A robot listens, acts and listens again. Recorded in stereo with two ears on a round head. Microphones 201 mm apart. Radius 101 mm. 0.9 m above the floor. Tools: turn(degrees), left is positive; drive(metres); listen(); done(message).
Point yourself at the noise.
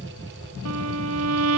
turn(degrees=-70)
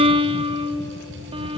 turn(degrees=-25)
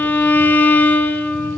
turn(degrees=10)
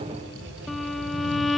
done("Facing the violin, under 1 m away.")